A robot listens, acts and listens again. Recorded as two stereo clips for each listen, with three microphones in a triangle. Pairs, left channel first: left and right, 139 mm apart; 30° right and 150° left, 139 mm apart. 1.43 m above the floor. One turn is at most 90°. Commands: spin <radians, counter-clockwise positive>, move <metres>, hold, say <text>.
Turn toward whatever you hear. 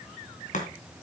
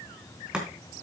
spin 1.13
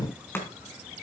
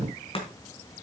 spin 0.26
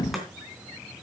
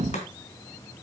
say Found it: chopping, straight ahead, 2 to 4 m away.